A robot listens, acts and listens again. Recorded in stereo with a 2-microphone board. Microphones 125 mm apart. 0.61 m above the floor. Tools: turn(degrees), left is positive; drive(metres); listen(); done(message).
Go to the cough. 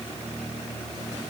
listen()
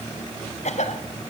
turn(degrees=65)
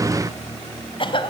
turn(degrees=45)
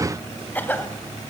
turn(degrees=15)
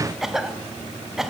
drive(metres=1.0)
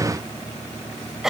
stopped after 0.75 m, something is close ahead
done("Something is in my way. I am facing the cough but have not reached it.")